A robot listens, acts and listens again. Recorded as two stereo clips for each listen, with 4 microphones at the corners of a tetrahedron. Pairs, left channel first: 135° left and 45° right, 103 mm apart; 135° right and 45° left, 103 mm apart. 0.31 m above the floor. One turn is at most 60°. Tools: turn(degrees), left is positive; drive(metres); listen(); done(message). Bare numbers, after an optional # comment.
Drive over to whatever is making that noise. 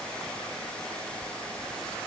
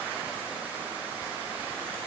listen()
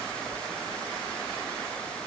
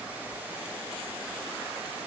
listen()
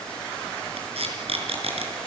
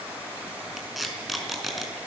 # The tape being pulled: 45° right.
turn(-45)
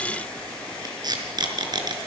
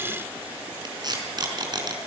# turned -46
drive(1.0)
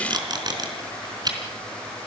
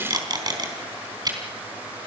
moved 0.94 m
drive(1.0)
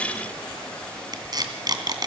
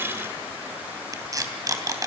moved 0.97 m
drive(1.0)
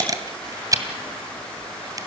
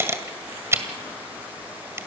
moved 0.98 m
# The tape being pulled is now 10° right.
turn(-10)
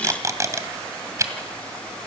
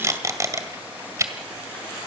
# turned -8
drive(1.0)
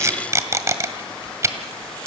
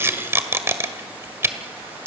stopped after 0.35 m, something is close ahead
done("I am next to the tape being pulled.")